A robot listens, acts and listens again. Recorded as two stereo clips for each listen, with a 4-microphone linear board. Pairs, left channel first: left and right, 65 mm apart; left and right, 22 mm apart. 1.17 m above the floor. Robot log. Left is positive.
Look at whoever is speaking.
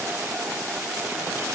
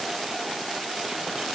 cmd idle
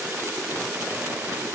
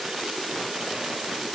cmd idle
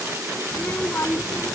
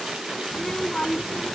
note: The child speaking: about 40° left or 140° left.
cmd yaw +40
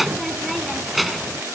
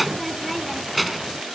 end: Found it: a child speaking, straight ahead.